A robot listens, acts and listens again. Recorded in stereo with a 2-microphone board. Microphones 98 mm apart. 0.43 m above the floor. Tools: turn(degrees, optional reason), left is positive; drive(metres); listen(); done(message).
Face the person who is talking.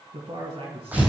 turn(degrees=-70, reason="The man speaking: about 70° right or 110° right.")
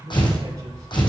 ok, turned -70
turn(degrees=-40, reason="So it is at 40° right.")
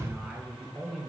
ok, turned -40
done("Found it: a man speaking, straight ahead, 2 to 4 m away.")